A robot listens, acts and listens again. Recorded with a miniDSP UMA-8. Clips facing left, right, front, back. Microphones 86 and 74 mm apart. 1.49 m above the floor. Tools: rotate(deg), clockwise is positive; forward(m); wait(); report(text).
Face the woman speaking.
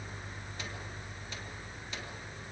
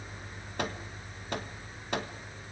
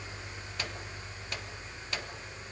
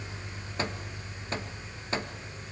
wait()
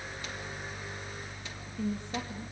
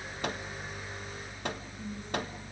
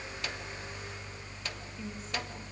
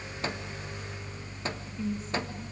rotate(-90)
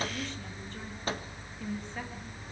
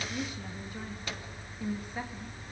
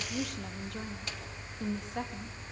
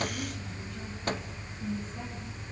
rotate(10)
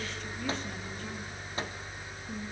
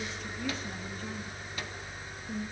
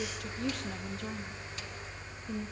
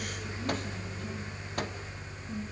report("Found it: a woman speaking, straight ahead.")